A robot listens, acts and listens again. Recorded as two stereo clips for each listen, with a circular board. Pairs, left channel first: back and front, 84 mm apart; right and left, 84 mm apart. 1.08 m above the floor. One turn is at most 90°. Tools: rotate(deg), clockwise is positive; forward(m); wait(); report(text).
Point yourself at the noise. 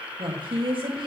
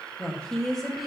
report("Found it: a woman speaking, straight ahead, 1 to 2 m away.")